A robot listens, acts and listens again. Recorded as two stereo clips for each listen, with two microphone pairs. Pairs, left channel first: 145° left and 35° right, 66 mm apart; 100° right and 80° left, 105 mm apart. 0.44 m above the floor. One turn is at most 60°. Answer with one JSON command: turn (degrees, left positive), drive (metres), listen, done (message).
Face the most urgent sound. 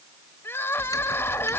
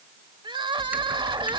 {"turn": 60}
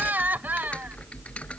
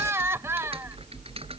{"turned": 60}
{"turn": 20}
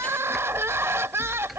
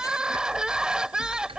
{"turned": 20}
{"done": "Facing the crying."}